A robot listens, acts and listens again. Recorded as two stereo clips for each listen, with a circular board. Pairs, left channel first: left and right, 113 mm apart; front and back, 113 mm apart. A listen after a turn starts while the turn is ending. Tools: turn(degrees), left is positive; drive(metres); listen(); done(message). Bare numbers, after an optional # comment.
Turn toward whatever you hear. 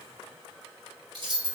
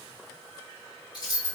# The keys jangling: 50° right.
turn(-50)
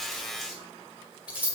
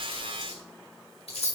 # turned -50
# The keys jangling is now 15° right.
turn(-15)
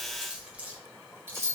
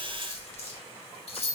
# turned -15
# The keys jangling is now 25° right.
turn(-25)
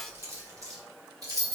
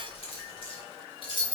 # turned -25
# The keys jangling is now 40° right.
turn(-40)
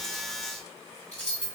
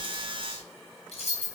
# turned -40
# The keys jangling is now 10° left.
turn(10)
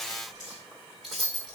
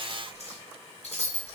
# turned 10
done("Facing the keys jangling, 1 to 2 m away.")